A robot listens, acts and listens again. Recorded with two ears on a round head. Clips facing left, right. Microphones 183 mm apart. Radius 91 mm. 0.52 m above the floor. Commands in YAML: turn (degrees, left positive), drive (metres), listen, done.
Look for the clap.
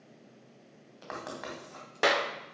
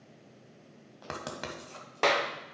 turn: 30
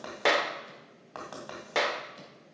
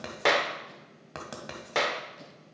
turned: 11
done: "Facing the clap."